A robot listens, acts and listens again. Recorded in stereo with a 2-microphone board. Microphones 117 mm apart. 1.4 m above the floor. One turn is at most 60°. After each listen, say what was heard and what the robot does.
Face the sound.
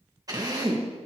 The drill: about 30° right or 150° right. Turn 30° right.
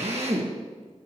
So it is at 120° right. Turn 60° right.
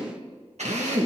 The drill is now 75° right. Turn 60° right.
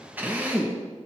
The drill is now 15° right. Turn 15° right.
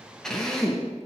Found it: a drill, straight ahead.